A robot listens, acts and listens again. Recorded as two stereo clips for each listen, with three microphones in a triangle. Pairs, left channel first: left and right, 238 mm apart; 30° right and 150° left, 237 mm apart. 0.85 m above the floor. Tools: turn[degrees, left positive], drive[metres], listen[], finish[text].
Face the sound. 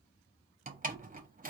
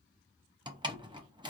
Thought: The door slam: 140° right.
Action: turn[-140]
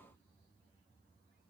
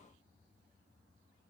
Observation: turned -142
Action: finish[Facing where the door slam came from. I can't hear it now.]